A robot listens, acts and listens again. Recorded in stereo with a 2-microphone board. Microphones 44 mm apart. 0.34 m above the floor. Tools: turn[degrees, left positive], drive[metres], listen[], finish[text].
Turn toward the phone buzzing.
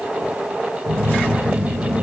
Action: turn[-90]
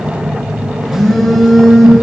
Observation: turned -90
Action: finish[Facing the phone buzzing, over 4 m away.]